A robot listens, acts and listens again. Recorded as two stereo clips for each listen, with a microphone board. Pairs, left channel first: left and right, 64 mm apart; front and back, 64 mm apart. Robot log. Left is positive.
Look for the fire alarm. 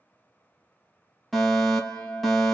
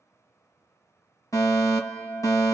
end: Facing the fire alarm.